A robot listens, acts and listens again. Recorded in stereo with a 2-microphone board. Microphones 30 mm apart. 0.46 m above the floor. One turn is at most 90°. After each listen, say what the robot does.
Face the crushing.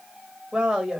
Keep listening.
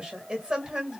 Keep listening.
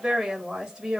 I can't make out crushing, only a woman speaking.